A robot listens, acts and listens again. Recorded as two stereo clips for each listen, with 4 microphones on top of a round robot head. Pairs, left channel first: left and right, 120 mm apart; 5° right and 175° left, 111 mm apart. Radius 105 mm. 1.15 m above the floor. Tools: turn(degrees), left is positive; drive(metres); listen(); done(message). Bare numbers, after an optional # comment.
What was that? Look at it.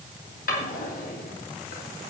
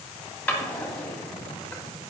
# The drawer: 75° left.
turn(75)
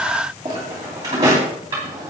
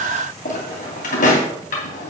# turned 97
# The drawer is now 20° right.
turn(-20)
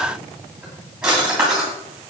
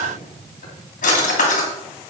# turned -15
done("Facing the drawer, 2 to 4 m away.")